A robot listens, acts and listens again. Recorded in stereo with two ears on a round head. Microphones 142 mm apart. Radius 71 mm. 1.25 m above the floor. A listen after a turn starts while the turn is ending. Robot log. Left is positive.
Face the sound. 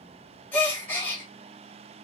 cmd yaw +30
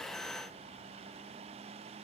cmd idle
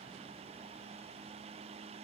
end: I heard a gasp, but can't make it out now. It was about 20° right or 140° left.